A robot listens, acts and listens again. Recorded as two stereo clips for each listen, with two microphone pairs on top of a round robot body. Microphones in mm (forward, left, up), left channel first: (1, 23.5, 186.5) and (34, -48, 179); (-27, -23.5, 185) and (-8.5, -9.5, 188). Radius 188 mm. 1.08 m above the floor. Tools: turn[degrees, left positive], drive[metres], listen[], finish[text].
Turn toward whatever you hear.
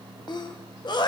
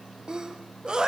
Thought: The sneeze: 85° left.
Action: turn[85]
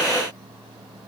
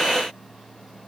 Action: finish[Facing where the sneeze came from. I can't hear it now.]